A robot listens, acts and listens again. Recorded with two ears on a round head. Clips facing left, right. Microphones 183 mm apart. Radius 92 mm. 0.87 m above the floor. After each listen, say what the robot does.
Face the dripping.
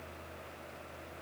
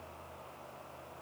Keep listening.
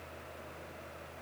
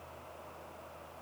Keep listening.
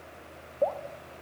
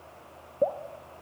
Turn 30° right.
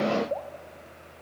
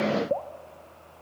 Turn 120° right.
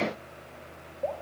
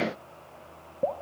Turn 60° right.
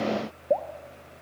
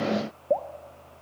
Facing the dripping.